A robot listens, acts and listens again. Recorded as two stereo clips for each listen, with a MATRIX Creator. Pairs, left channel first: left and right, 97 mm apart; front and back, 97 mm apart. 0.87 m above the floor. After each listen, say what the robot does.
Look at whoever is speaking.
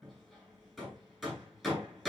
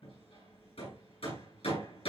Keep listening.
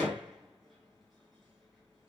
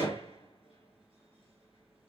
Keep listening.
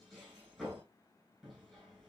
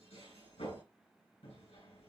I can't make out anyone speaking to turn to.